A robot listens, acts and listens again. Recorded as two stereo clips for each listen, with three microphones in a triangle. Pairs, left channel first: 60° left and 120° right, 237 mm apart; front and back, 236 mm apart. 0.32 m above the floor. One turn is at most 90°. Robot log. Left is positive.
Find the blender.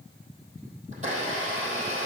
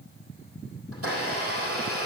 note: The blender: straight behind.
cmd yaw +90
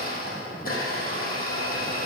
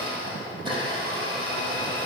note: The blender is now 110° left.
cmd yaw +90
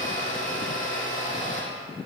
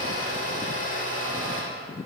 note: The blender is now 25° left.
cmd yaw +25
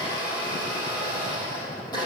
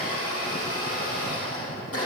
note: The blender is now 15° right.
cmd yaw -15
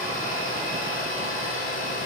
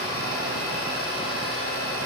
end: Facing the blender.